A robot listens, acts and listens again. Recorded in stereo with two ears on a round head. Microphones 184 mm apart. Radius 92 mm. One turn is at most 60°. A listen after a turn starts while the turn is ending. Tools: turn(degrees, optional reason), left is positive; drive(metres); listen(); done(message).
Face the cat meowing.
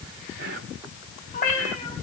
turn(degrees=40, reason="The cat meowing: about 40° left or 140° left.")
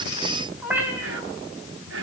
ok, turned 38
turn(degrees=-10, reason="So it is at 10° right.")
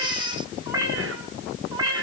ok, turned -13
turn(degrees=-20, reason="The cat meowing is now 20° right.")
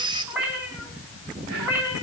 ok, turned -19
turn(degrees=-10, reason="The cat meowing is now 10° right.")
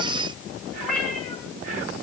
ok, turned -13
done("Facing the cat meowing, over 4 m away.")